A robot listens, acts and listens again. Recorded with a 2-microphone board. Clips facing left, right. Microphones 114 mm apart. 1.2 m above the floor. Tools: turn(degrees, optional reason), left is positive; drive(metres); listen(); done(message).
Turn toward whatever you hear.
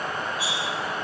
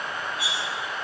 turn(degrees=-60, reason="The cutlery clinking: about 60° right or 120° right.")
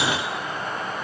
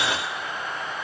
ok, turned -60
listen()
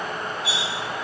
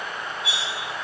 turn(degrees=-60, reason="So it is at 60° right.")
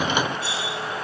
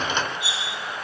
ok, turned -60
turn(degrees=-15, reason="The cutlery clinking is now 15° right.")
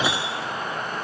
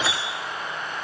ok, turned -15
done("Found it: cutlery clinking, straight ahead, 2 to 4 m away.")